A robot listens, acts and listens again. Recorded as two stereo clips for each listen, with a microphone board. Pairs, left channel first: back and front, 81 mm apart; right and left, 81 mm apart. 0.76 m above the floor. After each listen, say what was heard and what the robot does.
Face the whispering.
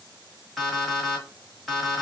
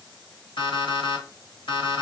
Keep listening.
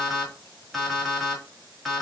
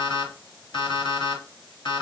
Keep listening.
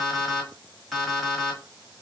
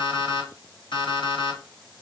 I can't make out whispering to turn to.